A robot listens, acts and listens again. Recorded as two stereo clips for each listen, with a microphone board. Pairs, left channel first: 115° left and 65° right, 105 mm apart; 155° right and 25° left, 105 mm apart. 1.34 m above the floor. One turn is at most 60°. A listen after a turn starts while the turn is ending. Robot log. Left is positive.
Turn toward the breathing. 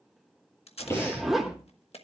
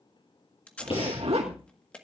note: The breathing: 175° left.
cmd yaw +60
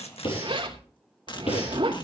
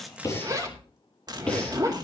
note: The breathing is now 125° left.
cmd yaw +60
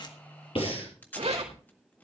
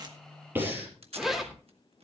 note: The breathing is now 90° left.
cmd yaw +60
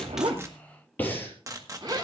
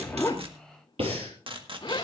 note: The breathing is now 40° left.
cmd yaw +40
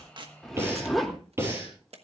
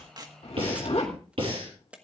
end: Found it: breathing, straight ahead.